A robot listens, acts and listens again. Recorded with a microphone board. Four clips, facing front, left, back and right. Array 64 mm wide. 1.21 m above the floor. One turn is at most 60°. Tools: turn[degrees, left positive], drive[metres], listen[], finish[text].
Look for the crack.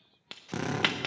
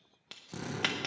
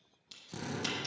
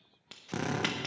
Action: finish[Found it: a crack, straight ahead.]